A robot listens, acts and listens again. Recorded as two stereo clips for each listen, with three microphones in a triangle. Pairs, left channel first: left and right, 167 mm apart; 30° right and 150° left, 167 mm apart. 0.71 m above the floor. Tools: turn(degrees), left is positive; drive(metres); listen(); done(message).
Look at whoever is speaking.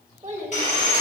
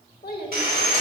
turn(degrees=-45)
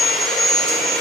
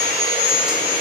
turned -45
listen()
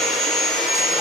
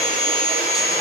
listen()
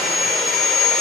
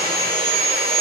done("I heard a child speaking from this way, but can't make it out now.")